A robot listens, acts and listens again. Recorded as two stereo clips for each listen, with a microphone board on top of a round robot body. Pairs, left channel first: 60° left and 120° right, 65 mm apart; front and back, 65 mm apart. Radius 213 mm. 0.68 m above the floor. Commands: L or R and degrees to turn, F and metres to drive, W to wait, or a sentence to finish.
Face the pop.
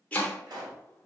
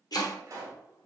R135
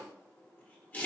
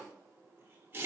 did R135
I heard a pop from this way, but can't make it out now.